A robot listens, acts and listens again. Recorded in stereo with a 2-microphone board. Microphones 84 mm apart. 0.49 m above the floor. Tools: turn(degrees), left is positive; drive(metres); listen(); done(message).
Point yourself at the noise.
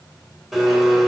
turn(degrees=-30)
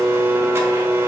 turn(degrees=-145)
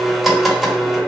done("Found it: a blender, straight ahead, 1 to 2 m away.")